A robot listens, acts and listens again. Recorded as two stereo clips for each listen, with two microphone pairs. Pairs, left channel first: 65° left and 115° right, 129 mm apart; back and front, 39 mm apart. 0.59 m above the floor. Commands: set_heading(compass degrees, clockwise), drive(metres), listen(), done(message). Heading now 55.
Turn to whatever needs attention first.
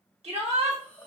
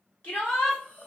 set_heading(195)
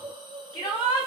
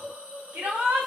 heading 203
set_heading(193)
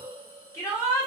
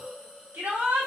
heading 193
done("Facing the shout, 1 to 2 m away.")